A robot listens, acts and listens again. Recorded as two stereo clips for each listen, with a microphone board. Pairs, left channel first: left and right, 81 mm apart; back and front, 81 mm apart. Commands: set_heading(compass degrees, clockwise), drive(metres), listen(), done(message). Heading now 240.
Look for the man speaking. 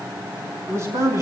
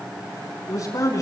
set_heading(20)
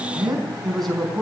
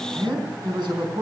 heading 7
done("Facing the man speaking, over 4 m away.")